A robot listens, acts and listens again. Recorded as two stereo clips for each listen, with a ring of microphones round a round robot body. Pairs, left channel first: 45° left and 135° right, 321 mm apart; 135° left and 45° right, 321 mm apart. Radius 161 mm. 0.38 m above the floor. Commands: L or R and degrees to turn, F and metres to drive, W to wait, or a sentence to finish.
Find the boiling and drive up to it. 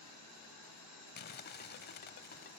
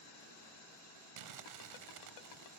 W
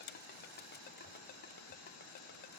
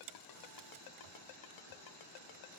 W
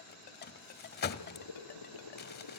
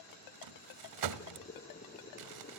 L70
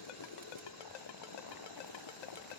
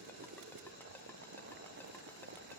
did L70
L15
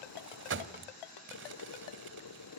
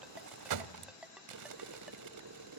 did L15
F1.0
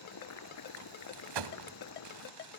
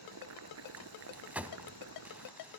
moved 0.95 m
F1.0
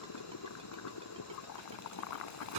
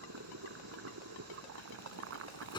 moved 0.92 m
F1.0
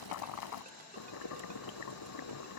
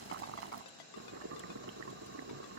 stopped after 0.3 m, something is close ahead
I am next to the boiling.